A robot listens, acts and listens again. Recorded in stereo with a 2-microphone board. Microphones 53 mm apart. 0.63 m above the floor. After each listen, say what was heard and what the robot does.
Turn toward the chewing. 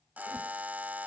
Keep listening.
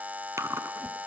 The chewing: about 70° right or 110° right. Turn 70° right.
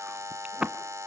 So it is at 25° right. Turn 25° right.
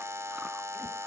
Keep listening.
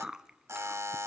The chewing is now 15° right. Turn 15° right.
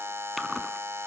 Found it: chewing, straight ahead, 1 to 2 m away.